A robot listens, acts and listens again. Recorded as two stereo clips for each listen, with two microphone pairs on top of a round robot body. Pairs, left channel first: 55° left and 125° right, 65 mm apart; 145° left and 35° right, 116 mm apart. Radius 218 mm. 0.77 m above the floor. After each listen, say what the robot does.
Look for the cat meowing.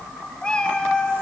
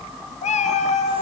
Turn 135° left.
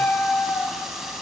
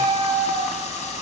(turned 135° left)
Facing the cat meowing.